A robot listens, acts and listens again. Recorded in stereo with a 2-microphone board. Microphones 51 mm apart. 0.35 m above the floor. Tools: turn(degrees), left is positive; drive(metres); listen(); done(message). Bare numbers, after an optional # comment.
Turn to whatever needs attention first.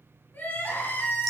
# The crying: about 35° left or 145° left.
turn(35)
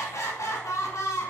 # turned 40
# So it is at 105° left.
turn(105)
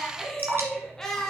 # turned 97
done("Found it: crying, straight ahead.")